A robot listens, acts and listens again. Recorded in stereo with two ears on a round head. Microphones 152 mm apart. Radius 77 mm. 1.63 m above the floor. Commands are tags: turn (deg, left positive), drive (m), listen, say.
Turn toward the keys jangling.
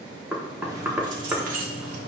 <turn deg="-60"/>
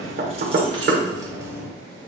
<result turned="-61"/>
<turn deg="-15"/>
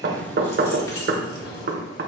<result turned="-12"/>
<turn deg="30"/>
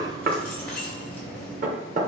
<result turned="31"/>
<turn deg="10"/>
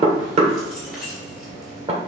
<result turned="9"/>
<say>Found it: keys jangling, straight ahead, 2 to 4 m away.</say>